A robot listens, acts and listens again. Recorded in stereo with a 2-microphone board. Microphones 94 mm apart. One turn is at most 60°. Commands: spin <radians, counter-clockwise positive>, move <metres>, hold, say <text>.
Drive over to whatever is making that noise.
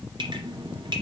spin -0.96
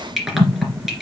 move 1.0
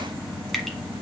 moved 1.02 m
move 1.0
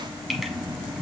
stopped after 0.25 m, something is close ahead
say I am next to the dripping.